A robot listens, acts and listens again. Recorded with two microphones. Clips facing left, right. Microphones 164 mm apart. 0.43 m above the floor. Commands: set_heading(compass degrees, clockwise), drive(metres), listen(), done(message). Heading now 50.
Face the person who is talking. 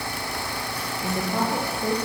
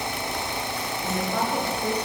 set_heading(20)
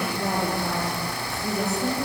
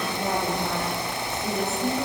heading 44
set_heading(14)
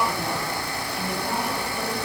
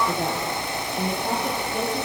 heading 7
set_heading(52)
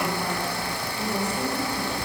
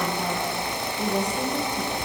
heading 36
set_heading(51)
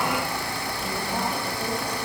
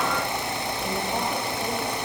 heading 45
listen()
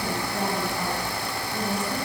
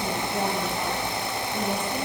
done("Facing the woman speaking.")